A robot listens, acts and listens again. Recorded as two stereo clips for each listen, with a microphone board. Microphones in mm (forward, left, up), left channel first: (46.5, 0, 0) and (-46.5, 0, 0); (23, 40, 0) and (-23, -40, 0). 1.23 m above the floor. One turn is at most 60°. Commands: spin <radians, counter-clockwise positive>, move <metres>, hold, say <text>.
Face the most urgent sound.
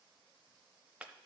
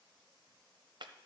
hold
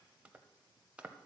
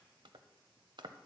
hold
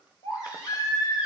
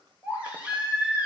spin -0.79
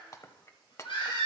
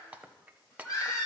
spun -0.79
spin 0.17
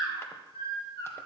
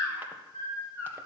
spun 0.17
say Found it: a baby crying, straight ahead.